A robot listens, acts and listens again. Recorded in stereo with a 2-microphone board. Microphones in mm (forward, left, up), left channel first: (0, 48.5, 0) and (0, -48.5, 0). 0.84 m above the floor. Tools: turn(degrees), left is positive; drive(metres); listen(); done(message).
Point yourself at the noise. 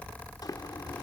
turn(degrees=40)
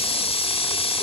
turn(degrees=100)
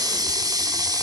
turn(degrees=-40)
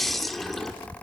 done("Facing the running tap.")